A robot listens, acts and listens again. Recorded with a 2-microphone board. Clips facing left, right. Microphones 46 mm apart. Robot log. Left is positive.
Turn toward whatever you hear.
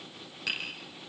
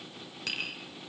cmd yaw +30
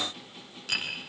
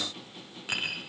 note: So it is at 25° right.
cmd yaw -25
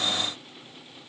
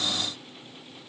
cmd idle
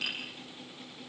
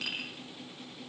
end: Facing the tapping, over 4 m away.